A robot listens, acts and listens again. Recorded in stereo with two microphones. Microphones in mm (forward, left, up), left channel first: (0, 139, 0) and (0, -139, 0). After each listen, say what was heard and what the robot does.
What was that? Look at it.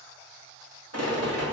The rattle: about 70° right or 110° right. Turn 70° right.
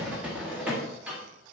Found it: a rattle, straight ahead.